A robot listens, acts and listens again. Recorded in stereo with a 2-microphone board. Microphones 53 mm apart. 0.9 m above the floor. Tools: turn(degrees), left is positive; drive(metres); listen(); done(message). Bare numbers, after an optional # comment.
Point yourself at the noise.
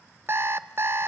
# The alarm clock: about 45° right or 135° right.
turn(-45)
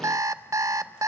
# So it is at 85° right.
turn(-85)
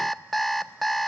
done("Found it: an alarm clock, straight ahead, under 1 m away.")